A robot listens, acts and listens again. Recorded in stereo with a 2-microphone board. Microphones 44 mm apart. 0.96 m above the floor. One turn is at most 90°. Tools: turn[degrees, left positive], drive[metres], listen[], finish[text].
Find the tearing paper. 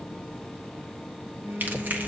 Thought: The tearing paper: about 50° right or 130° right.
Action: turn[-50]
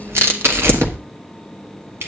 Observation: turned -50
Thought: So it is at 80° right.
Action: turn[-80]
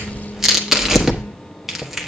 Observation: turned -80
Action: finish[Facing the tearing paper, 1 to 2 m away.]